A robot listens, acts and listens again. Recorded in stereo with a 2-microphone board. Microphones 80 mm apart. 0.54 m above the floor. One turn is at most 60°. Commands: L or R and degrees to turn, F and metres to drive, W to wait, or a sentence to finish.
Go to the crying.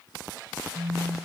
W
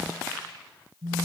W
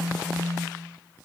I can't make out crying to turn to.